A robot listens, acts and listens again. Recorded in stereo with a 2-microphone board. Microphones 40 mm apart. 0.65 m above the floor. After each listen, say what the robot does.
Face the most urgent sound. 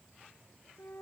Keep listening.
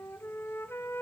Keep listening.
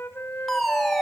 Turn 30° left.
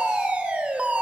Turn 30° right.
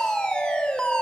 Turn 20° left.
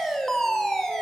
Turn 10° left.
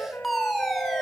Facing the fire alarm.